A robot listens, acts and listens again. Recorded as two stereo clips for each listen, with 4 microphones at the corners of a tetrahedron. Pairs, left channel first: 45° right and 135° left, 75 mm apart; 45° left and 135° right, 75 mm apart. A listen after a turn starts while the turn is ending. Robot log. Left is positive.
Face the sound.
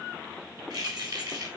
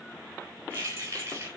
note: The keys jangling: 165° left.
cmd yaw +165
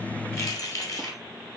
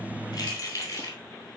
end: Facing the keys jangling.